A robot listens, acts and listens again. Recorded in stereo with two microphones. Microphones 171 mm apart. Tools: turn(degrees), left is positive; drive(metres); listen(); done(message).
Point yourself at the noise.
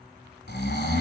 turn(degrees=90)
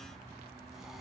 listen()
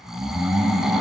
done("Found it: snoring, straight ahead.")